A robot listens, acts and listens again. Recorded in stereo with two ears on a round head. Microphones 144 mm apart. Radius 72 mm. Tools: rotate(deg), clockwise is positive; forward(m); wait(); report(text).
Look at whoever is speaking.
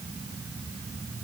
wait()
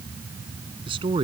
rotate(30)
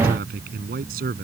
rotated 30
rotate(120)
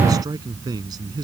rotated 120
rotate(25)
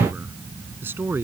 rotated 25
rotate(15)
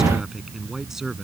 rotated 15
report("Facing the man speaking.")